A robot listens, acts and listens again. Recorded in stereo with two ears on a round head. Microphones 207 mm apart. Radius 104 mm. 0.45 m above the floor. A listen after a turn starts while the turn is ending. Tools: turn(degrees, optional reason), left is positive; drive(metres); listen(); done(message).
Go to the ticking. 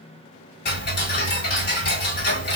turn(degrees=45, reason="The ticking: about 45° left or 135° left.")
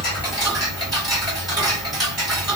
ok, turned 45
drive(metres=1.0)
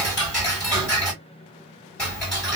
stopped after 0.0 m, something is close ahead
done("Blocked. The ticking is further on, straight ahead.")